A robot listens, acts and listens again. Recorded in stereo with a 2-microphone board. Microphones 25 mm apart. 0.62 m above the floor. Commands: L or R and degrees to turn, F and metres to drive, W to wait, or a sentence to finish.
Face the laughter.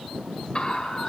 L40
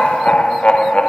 L125
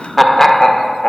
L25
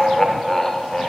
L25
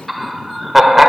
Found it: laughter, straight ahead, 1 to 2 m away.